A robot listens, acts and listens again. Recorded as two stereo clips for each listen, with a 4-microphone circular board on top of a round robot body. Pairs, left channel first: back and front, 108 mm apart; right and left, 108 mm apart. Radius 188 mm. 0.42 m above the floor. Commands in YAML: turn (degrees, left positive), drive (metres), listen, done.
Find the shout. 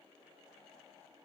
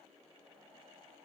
listen: true
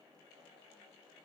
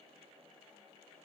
listen: true
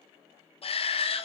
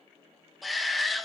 turn: 180
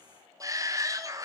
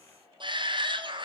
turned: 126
turn: 55
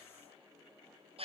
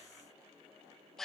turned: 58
done: "Facing the shout, 2 to 4 m away."